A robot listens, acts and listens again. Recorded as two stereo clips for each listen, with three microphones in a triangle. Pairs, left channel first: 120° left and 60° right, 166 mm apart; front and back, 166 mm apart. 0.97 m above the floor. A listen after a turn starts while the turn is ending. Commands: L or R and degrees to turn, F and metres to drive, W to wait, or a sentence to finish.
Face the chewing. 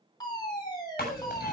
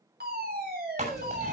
L140
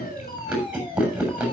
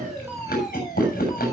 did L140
L25
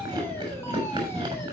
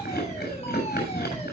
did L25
Facing the chewing, over 4 m away.